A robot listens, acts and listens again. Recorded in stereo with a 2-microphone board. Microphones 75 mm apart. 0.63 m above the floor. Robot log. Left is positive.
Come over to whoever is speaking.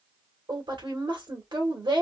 cmd yaw -90
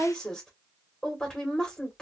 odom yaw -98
note: So it is at 10° left.
cmd yaw +10
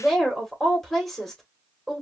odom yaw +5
cmd fwd 1.0
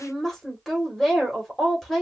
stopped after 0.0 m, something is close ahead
end: Blocked. The woman speaking is further on, straight ahead.